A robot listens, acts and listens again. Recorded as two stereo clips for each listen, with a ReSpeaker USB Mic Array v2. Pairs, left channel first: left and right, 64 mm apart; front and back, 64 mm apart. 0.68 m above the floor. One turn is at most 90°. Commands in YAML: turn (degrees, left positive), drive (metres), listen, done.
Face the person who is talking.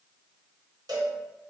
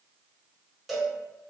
listen: true
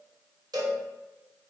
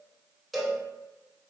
listen: true
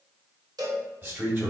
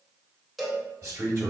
turn: -90
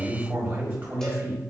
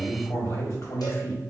turn: -35
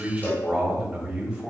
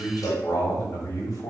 turn: -15
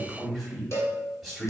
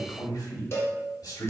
done: "Facing the man speaking."